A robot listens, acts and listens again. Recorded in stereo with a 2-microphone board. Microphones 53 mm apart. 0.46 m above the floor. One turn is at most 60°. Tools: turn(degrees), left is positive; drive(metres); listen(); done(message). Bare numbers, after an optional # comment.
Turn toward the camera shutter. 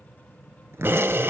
# The camera shutter: about 40° right or 140° right.
turn(-40)
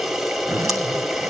done("Found it: a camera shutter, straight ahead.")